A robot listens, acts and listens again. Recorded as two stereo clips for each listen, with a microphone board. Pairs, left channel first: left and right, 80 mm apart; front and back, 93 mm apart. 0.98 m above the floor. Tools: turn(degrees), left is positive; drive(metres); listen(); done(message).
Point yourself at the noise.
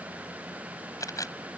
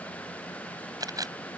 turn(degrees=135)
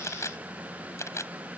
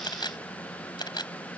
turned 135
turn(degrees=35)
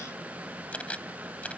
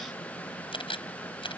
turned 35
turn(degrees=15)
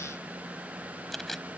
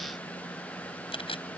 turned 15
done("Facing the camera shutter.")